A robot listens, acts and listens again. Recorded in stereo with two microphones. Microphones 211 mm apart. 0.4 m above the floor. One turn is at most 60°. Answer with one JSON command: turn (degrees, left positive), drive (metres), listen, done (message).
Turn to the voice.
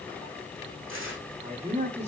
{"turn": -35}
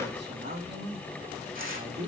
{"turn": -60}
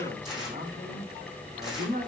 {"turn": -40}
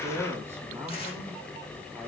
{"turn": -10}
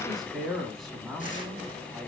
{"done": "Found it: a man speaking, straight ahead."}